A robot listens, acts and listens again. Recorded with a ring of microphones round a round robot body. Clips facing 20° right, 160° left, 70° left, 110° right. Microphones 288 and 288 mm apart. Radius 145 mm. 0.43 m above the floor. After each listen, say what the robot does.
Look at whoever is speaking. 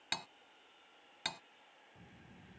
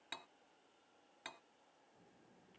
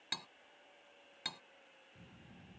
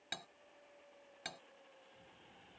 Turn 30° left.
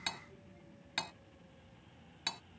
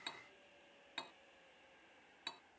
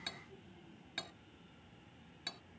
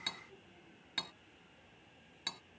Found it: a child speaking, straight ahead.